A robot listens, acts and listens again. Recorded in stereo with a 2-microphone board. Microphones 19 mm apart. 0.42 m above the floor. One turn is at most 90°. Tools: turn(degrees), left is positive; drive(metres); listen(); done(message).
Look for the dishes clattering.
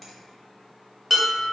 turn(degrees=-30)
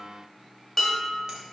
turn(degrees=15)
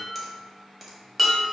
done("Facing the dishes clattering, 1 to 2 m away.")